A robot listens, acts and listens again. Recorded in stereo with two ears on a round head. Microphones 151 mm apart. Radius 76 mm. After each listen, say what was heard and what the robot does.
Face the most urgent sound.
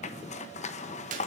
Keep listening.
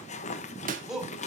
Turn 30° right.
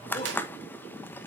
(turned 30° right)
Keep listening.
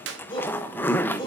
So it is at 30° left. Turn 30° left.
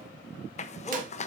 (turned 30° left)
Keep listening.
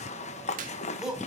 Found it: a shout, straight ahead, over 4 m away.